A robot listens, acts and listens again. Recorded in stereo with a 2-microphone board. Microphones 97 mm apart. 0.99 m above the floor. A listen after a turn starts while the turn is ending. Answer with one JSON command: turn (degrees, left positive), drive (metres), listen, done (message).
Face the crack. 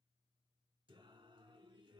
{"listen": true}
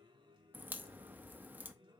{"turn": -20}
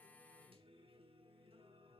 {"listen": true}
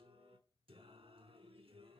{"done": "I heard a crack, but can't make it out now. It was about straight ahead or 140° right."}